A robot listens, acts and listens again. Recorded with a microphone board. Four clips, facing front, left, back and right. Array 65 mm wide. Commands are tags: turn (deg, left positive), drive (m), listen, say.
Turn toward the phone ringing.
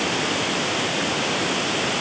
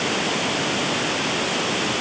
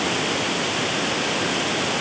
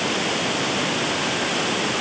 <listen/>
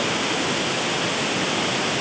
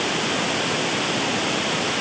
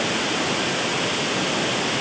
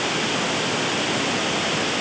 <listen/>
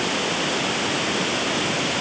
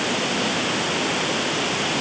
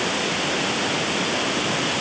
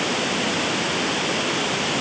<say>I can't make out a phone ringing.</say>